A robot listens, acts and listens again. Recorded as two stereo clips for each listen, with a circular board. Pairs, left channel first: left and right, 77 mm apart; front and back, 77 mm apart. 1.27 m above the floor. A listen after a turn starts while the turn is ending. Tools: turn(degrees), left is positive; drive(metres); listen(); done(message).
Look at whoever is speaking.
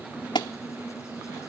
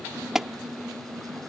listen()
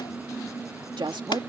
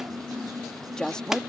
turn(degrees=-85)
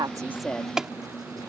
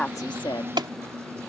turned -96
turn(degrees=10)
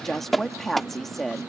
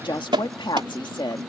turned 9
done("Found it: a woman speaking, straight ahead.")